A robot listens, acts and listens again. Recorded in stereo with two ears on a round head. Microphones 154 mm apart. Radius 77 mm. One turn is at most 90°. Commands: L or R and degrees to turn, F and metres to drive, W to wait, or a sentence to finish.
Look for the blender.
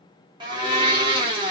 R25
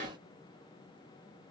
W
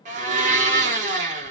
R90
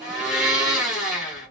Facing the blender.